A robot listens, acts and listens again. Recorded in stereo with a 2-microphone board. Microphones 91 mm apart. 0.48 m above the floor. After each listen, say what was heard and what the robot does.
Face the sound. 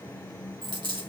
The dropped coin: about 60° right or 120° right. Turn 60° right.
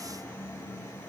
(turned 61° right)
Keep listening.
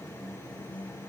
I heard a dropped coin, but can't make it out now. It was about straight ahead or 55° right.